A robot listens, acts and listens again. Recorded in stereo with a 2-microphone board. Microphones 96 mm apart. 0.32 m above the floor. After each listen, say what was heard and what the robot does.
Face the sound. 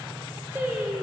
The singing: about 15° right or 165° right. Turn 15° right.
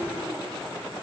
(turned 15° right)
Keep listening.
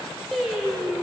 Turn 30° left.
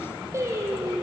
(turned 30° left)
So it is at 30° right. Turn 30° right.
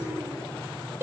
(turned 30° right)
The singing is now 25° right. Turn 25° right.
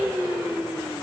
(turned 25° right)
The singing is now 15° right. Turn 15° right.
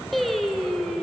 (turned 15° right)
Found it: singing, straight ahead, 2 to 4 m away.